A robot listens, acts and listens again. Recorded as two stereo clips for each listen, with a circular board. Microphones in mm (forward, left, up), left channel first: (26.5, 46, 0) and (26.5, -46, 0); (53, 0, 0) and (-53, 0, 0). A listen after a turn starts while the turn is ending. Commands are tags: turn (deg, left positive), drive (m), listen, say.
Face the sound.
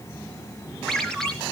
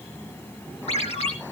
<say>Found it: a ringtone, straight ahead.</say>